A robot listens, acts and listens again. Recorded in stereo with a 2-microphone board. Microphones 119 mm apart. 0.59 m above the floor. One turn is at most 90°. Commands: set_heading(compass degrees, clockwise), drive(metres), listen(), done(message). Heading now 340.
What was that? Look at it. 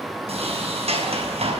set_heading(35)
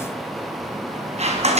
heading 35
set_heading(105)
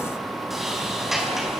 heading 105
done("Found it: a sliding door, straight ahead, over 4 m away.")